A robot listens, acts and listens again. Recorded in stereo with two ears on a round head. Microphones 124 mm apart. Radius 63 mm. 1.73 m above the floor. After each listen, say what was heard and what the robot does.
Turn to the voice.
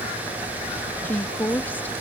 Turn 30° left.
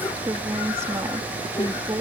So it is at 20° right. Turn 20° right.
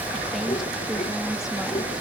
Keep listening.
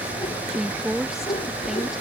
Found it: a woman speaking, straight ahead.